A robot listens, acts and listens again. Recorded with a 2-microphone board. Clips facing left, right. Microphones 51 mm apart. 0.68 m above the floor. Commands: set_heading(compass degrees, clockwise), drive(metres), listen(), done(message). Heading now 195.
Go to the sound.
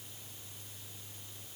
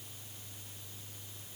listen()
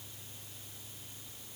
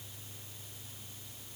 listen()
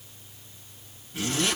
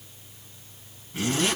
set_heading(215)
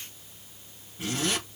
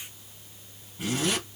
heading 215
drive(1.0)
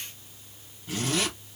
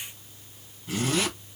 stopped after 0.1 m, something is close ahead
done("Blocked. The zipper is further on, straight ahead.")